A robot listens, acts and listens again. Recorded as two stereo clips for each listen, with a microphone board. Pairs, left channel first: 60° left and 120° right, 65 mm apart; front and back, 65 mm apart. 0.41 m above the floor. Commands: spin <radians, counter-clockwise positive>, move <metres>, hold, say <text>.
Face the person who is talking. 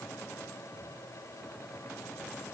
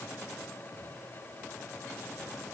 hold
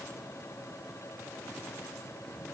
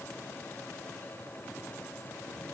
hold
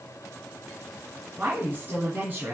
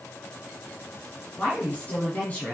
spin -1.13
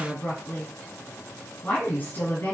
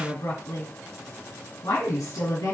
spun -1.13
say Facing the woman speaking, 2 to 4 m away.